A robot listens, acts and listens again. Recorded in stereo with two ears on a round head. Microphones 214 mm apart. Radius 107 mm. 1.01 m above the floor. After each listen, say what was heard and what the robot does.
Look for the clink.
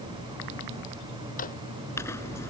Turn 30° left.
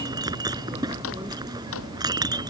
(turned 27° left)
So it is at 15° right. Turn 15° right.
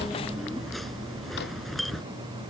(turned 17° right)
Facing the clink.